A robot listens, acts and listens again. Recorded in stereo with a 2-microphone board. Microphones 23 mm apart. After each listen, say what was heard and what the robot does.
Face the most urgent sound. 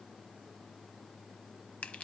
Keep listening.
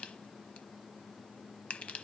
Keep listening.
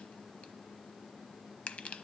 I can't make out anything urgent to turn to.